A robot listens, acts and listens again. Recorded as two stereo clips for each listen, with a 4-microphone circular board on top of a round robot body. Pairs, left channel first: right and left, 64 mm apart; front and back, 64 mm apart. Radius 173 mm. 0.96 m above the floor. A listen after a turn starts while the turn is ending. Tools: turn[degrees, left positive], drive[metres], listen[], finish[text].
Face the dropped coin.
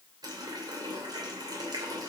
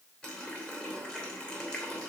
Action: listen[]
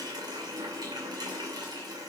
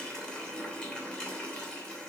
Action: listen[]
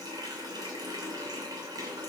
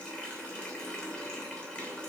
Action: finish[I can't make out a dropped coin to turn to.]